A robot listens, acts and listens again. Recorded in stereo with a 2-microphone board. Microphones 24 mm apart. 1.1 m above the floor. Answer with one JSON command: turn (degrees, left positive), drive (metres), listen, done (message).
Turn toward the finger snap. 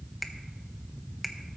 {"turn": 30}
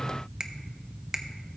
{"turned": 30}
{"turn": -30}
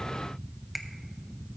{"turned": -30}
{"done": "Facing the finger snap, under 1 m away."}